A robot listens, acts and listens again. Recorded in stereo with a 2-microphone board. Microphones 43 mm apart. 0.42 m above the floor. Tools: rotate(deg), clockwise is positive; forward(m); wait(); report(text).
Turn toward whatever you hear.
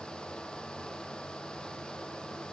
wait()
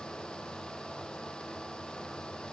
wait()
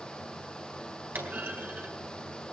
rotate(55)
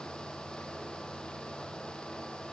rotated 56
wait()
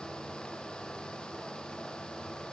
report("I heard a clunk, but can't make it out now. It was about 5° left or 70° right.")